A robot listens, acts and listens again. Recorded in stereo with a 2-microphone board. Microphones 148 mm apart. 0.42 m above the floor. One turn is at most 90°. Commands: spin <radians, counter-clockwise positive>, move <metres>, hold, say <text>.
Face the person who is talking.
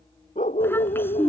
spin 0.52
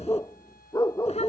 spin 1.57
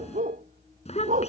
spin 0.87
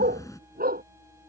spin 0.35
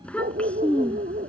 spin 0.17
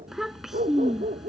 say Found it: a child speaking, straight ahead.